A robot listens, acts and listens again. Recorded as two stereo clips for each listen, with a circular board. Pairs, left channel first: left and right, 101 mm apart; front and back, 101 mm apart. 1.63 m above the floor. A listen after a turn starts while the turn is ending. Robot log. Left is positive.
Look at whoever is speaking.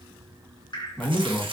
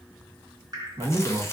note: The man speaking: 160° left.
cmd yaw +160
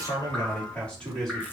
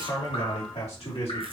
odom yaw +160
end: Found it: a man speaking, straight ahead.